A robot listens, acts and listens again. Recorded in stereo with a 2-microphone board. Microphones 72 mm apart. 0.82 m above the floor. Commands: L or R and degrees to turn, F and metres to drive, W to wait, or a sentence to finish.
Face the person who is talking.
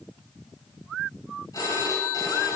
W
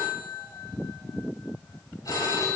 W
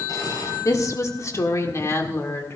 L35
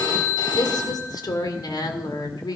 L110
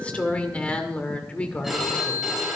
L15
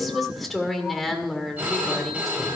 Found it: a woman speaking, straight ahead.